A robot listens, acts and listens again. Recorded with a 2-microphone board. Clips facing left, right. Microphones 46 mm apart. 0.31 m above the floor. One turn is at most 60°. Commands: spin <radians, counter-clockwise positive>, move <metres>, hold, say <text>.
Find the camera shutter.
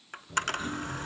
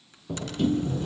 spin 1.05
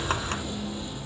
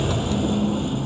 hold
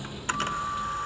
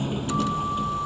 hold
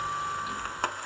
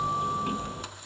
spin 0.96
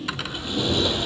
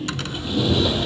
hold
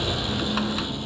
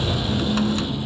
hold
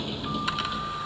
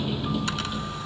say I heard a camera shutter from this way, but can't make it out now.